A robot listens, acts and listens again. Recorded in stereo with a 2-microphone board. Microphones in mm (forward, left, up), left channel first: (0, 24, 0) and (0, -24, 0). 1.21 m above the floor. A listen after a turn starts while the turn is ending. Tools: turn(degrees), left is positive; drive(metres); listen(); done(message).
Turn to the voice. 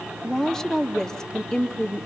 turn(degrees=30)
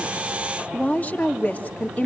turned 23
turn(degrees=145)
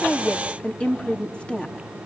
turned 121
turn(degrees=25)
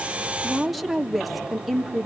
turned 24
done("Facing the woman speaking, 2 to 4 m away.")